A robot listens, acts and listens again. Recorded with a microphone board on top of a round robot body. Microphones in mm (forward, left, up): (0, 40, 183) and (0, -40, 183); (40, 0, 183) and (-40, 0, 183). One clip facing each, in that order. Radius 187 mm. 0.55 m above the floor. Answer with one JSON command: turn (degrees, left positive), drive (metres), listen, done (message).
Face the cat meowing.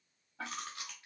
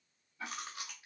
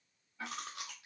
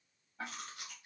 {"listen": true}
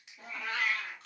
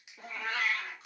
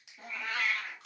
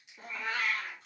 {"turn": -125}
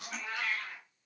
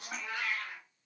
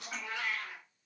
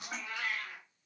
{"turn": -10}
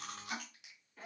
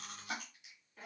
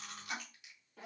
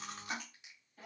{"done": "Found it: a cat meowing, straight ahead."}